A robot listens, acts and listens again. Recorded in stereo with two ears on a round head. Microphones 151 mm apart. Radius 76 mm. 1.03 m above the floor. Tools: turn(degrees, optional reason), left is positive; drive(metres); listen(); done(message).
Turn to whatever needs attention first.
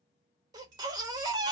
turn(degrees=-25, reason="The baby crying: about 25° right or 155° right.")
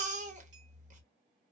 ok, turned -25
turn(degrees=-130, reason="So it is at 130° right.")
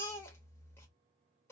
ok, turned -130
turn(degrees=15, reason="The baby crying is now 15° left.")
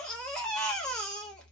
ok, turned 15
done("Found it: a baby crying, straight ahead.")